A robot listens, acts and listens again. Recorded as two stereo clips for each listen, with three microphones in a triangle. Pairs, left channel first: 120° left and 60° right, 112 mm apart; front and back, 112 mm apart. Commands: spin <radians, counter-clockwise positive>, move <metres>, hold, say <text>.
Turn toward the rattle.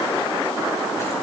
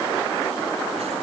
hold
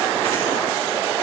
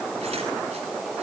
hold
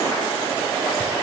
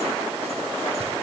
say I can't make out a rattle to turn to.